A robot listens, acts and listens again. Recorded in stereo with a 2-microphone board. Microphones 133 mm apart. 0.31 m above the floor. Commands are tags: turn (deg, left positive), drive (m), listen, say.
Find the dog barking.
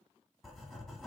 <listen/>
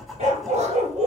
<turn deg="-70"/>
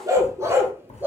<turn deg="-15"/>
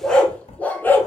<turn deg="15"/>
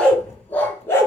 <turn deg="20"/>
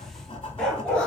<say>Found it: a dog barking, straight ahead.</say>